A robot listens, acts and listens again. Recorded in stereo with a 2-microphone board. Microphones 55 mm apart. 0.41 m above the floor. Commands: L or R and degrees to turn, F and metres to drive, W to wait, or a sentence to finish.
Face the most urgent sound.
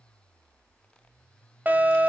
R30
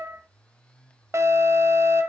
R115
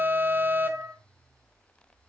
R40
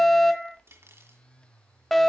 Facing the alarm.